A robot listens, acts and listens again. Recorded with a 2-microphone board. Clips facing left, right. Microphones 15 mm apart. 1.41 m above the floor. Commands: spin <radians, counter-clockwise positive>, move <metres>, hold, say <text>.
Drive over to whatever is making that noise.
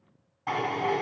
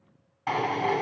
spin -0.44
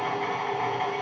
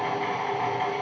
move 1.0
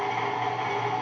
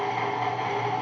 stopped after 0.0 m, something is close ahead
say Something is in my way. I am facing the drill but have not reached it.